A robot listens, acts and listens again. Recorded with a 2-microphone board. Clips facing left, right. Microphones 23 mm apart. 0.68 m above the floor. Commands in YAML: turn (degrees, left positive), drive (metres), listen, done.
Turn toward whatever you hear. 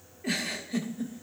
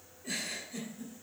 turn: 65
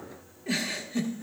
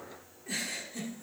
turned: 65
turn: 35
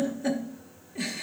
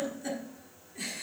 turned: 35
turn: 20
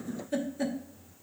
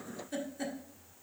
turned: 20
done: "Found it: a giggle, straight ahead."